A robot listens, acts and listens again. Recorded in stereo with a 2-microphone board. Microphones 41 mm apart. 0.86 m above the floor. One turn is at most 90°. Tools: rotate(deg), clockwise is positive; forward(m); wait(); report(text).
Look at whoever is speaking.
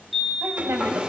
rotate(75)
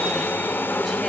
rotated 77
wait()
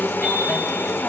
wait()
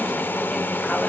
report("I heard a woman speaking, but can't make it out now. It was about 5° left or 30° right.")